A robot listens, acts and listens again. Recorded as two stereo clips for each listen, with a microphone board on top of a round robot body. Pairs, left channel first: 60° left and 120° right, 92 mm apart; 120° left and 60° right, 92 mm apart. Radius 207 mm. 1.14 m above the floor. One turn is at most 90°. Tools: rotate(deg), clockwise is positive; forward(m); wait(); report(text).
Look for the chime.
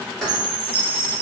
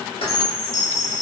rotate(90)
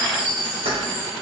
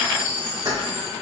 rotate(45)
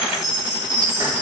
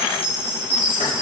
report("Found it: a chime, straight ahead.")